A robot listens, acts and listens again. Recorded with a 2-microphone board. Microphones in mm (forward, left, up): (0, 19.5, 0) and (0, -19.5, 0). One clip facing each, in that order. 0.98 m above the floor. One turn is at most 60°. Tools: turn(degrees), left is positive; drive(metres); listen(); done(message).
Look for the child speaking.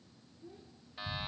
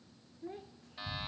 turn(degrees=-60)
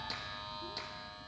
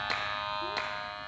listen()
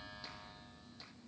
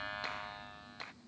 listen()
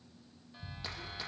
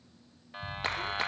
done("I heard a child speaking, but can't make it out now. It was about 10° right or 50° right.")